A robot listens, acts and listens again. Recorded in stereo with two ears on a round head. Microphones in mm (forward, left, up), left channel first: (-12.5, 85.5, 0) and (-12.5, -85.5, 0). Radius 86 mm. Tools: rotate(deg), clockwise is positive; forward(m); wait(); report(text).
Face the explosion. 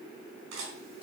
wait()
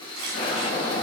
rotate(-55)
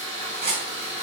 wait()
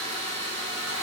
report("I heard an explosion, but can't make it out now. It was about straight ahead or 70° left.")